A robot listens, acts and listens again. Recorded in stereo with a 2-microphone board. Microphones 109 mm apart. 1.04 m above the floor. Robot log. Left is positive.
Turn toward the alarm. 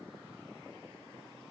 cmd idle
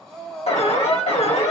cmd yaw +90
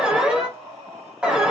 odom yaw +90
note: So it is at 10° right.
cmd yaw -10
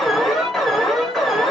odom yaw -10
end: Found it: an alarm, straight ahead.